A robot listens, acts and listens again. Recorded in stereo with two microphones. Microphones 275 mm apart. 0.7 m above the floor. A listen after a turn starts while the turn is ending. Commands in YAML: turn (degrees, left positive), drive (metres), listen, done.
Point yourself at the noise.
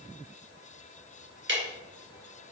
turn: -45
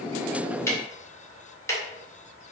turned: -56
turn: 10
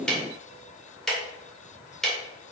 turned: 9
done: "Facing the ticking."